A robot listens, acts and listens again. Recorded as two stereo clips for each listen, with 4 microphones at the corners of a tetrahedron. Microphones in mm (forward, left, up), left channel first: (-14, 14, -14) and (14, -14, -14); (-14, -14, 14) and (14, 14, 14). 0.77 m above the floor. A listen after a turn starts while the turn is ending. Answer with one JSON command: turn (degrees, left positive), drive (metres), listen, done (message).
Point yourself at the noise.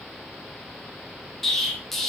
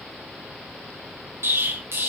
{"turn": 50}
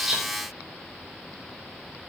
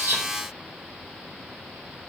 {"done": "I heard an explosion from this way, but can't make it out now."}